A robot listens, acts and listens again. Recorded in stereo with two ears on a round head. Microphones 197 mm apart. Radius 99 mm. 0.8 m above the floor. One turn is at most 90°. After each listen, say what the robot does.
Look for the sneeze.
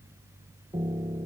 Keep listening.
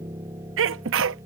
Turn 55° right.
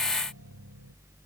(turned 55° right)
Keep listening.
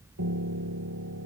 I heard a sneeze, but can't make it out now. It was about straight ahead or 70° right.